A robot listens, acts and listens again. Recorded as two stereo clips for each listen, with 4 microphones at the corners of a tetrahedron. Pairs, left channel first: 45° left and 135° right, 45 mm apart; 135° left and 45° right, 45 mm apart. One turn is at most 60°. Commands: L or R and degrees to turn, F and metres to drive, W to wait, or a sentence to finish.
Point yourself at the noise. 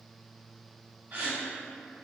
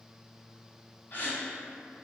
R60
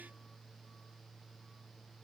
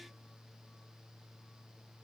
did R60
R60
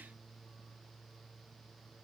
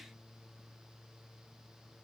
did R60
R55
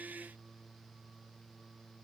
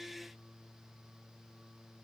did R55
I heard a gasp from this way, but can't make it out now.